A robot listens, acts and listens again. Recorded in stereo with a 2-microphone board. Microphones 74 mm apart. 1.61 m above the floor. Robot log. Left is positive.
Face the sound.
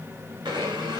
cmd yaw -90
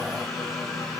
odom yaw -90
end: Found it: a blender, straight ahead.